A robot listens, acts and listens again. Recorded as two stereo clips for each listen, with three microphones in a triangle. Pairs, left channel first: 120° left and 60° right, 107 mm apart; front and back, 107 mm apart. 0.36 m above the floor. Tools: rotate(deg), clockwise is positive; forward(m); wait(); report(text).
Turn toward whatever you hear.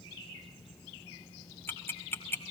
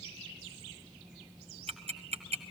rotate(170)
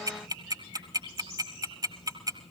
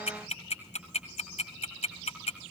report("Facing the ticking.")